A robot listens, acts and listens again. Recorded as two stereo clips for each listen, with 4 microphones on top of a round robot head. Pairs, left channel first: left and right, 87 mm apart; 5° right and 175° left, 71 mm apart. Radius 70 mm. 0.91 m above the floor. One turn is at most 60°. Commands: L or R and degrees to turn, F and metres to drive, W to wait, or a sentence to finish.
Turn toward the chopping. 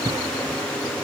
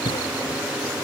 W
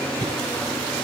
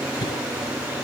W
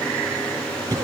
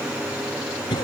I can't make out chopping, only a cough.